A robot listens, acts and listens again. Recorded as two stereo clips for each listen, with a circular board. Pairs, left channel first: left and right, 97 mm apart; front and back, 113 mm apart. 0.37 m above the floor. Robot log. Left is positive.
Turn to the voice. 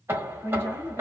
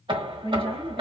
note: The woman speaking: 30° left.
cmd yaw +30
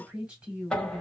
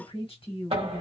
note: The woman speaking is now 10° right.
cmd yaw -10
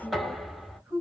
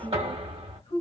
end: Found it: a woman speaking, straight ahead.